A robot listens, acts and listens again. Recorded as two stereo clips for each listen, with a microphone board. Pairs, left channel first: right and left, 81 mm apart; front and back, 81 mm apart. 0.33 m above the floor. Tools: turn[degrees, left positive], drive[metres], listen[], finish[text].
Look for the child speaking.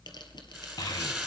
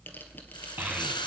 Thought: The child speaking: 115° right.
Action: turn[-115]
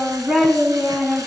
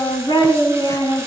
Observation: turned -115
Thought: The child speaking is now 20° left.
Action: turn[20]
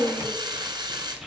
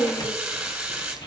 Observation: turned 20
Action: finish[Found it: a child speaking, straight ahead.]